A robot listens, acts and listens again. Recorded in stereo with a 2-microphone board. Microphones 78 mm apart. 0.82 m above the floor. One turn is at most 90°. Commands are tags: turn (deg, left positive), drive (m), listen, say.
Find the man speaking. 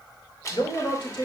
<turn deg="70"/>
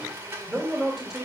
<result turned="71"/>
<turn deg="-10"/>
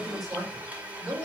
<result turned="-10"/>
<say>Facing the man speaking.</say>